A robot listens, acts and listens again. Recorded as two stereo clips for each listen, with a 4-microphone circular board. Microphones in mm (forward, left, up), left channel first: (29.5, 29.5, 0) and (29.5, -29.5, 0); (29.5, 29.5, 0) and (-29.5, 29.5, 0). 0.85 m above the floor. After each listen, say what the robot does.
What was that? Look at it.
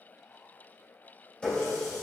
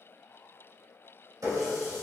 Turn 165° left.
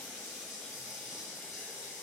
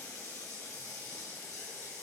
Turn 10° right.
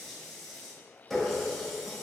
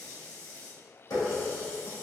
Facing the running tap, 1 to 2 m away.